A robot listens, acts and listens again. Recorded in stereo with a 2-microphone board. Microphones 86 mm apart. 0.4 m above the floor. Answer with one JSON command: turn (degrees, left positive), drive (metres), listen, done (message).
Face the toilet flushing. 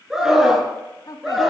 {"listen": true}
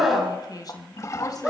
{"turn": 40}
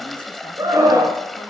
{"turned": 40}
{"done": "Facing the toilet flushing, 1 to 2 m away."}